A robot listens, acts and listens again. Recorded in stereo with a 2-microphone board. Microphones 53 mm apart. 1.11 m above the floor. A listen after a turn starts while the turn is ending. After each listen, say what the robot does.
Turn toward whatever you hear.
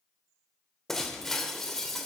Turn 30° left.
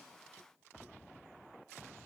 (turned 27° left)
Keep listening.
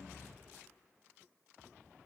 I heard breaking glass, but can't make it out now. It was about 20° right or 145° left.